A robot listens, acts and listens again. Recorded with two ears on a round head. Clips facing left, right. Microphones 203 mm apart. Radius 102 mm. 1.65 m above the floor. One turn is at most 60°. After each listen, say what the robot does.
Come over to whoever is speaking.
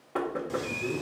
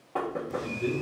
Turn 35° right.
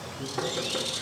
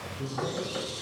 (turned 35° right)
Keep listening.
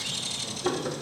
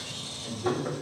Keep listening.
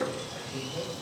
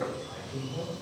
Drive 1.0 m forward.
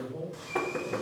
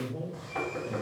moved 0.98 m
Drive 1.0 m forward.
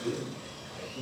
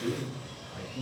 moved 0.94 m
Turn 15° right.
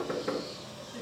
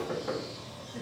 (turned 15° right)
Drive 1.0 m forward.
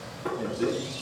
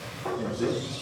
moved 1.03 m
Drive 1.0 m forward.
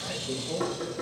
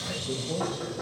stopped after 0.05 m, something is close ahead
I am next to the man speaking.